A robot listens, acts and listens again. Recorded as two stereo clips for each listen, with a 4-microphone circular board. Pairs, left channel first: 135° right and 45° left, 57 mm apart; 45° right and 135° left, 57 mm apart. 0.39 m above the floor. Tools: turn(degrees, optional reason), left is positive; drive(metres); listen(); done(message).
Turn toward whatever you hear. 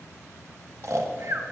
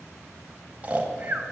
turn(degrees=70, reason="The snoring: 70° left.")
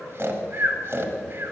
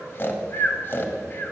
done("Facing the snoring, under 1 m away.")